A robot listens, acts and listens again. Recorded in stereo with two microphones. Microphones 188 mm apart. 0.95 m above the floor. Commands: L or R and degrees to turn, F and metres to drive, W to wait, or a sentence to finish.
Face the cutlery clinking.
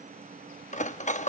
L40
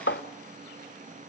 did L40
L100
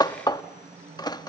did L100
L20
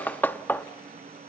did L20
L10
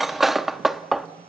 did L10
Facing the cutlery clinking, under 1 m away.